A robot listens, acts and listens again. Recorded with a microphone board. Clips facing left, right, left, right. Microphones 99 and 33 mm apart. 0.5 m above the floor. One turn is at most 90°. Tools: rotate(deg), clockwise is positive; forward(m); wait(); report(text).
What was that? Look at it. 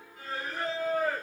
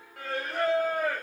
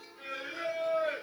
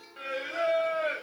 rotate(70)
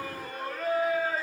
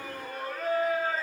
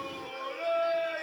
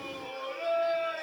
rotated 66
report("Facing the singing, 2 to 4 m away.")